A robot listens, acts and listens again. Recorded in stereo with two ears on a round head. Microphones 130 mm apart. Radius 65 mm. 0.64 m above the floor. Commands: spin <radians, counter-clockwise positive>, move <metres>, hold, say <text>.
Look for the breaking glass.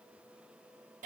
hold
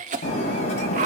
spin 0.87
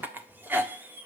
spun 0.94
hold
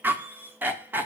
say I heard breaking glass, but can't make it out now. It was about straight ahead or 75° left.